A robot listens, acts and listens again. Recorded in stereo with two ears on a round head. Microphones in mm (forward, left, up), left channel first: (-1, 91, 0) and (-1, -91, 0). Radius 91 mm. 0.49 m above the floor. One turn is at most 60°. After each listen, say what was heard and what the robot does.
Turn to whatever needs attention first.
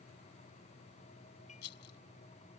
Keep listening.
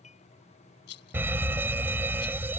Turn 30° right.
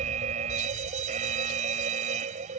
So it is at 140° right. Turn 60° right.
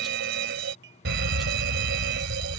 The fire alarm is now 75° right. Turn 60° right.
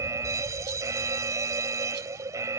The fire alarm is now 20° right. Turn 20° right.
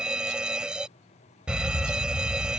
Facing the fire alarm.